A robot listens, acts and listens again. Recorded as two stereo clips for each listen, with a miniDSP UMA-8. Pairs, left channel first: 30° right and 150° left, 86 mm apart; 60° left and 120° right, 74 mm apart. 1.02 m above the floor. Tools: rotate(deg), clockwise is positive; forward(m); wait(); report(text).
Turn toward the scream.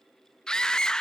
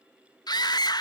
rotate(-50)
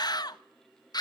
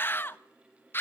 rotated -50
report("Facing the scream, 1 to 2 m away.")